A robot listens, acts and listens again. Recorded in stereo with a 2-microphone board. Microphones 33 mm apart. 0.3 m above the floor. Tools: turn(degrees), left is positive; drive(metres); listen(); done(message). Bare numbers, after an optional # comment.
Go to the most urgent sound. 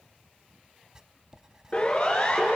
# The siren: about 40° left or 140° left.
turn(40)
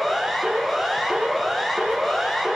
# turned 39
drive(1.0)
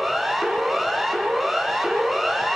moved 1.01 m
drive(1.0)
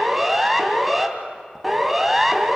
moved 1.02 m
drive(1.0)
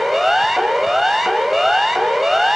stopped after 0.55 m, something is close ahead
done("Arrived at the siren, straight ahead.")